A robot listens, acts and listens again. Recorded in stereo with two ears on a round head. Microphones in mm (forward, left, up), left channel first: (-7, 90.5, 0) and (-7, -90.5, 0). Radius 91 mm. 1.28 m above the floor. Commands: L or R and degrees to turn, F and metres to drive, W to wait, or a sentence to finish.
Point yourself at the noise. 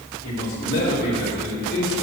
L65
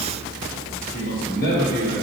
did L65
L50
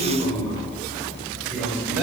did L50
R10
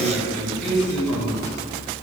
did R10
Facing the man speaking.